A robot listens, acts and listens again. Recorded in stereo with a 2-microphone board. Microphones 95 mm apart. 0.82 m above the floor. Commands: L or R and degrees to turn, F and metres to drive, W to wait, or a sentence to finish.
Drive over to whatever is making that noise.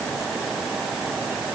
W
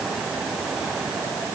W
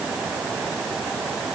I can't make out anything to turn to.